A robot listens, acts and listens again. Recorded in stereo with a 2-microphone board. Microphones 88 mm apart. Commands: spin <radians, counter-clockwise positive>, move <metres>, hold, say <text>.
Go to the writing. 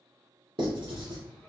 spin -1.22
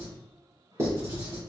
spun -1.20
spin -0.61
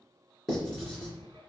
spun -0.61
move 1.0
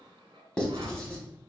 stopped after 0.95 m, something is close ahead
spin 0.17
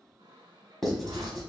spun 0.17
say Arrived at the writing, straight ahead.